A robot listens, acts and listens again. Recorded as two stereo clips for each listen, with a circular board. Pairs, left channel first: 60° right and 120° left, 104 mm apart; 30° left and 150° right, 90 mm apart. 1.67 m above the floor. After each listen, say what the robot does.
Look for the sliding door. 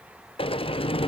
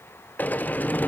Turn 40° right.
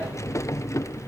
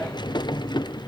Facing the sliding door.